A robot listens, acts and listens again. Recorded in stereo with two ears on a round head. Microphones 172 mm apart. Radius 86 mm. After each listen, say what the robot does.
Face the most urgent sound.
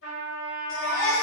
Turn 30° left.
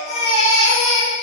Turn 145° left.
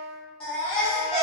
Found it: a baby crying, straight ahead, 1 to 2 m away.